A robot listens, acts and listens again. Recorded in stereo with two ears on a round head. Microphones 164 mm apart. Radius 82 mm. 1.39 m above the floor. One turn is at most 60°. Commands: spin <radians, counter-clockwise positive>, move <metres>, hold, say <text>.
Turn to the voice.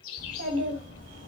spin -1.05
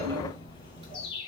spin -0.52
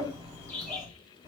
spin -0.44
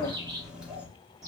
spin -0.17
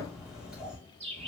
say Facing the child speaking.